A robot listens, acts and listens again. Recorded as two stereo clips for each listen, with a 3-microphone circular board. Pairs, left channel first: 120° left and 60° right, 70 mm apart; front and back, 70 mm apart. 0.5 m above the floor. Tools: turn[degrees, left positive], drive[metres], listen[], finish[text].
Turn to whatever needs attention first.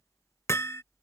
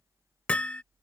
Action: listen[]
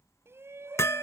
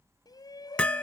Thought: The shout: 10° right.
Action: turn[-10]
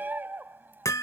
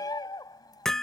Action: finish[Found it: a shout, straight ahead.]